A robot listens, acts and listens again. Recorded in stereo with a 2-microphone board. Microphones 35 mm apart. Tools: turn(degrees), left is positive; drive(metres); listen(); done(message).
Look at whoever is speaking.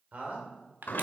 turn(degrees=-45)
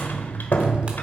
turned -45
listen()
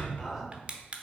done("Found it: a man speaking, straight ahead, 2 to 4 m away.")